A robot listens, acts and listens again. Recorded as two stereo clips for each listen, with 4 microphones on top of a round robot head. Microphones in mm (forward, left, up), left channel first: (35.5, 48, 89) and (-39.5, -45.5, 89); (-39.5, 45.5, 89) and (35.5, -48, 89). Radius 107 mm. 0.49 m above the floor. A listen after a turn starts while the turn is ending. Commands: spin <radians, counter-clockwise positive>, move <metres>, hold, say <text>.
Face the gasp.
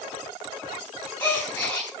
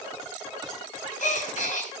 spin 2.27
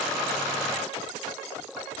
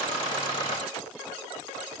say I heard a gasp from this way, but can't make it out now.